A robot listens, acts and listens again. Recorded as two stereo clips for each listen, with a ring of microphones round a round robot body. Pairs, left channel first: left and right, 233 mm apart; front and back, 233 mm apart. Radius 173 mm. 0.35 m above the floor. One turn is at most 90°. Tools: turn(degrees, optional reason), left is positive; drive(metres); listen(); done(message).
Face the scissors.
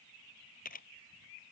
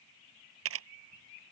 listen()
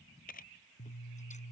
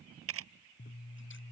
turn(degrees=30, reason="The scissors: 30° left.")
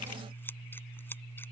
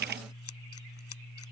turn(degrees=10, reason="The scissors is now 10° left.")
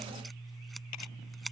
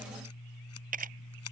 done("Found it: scissors, straight ahead.")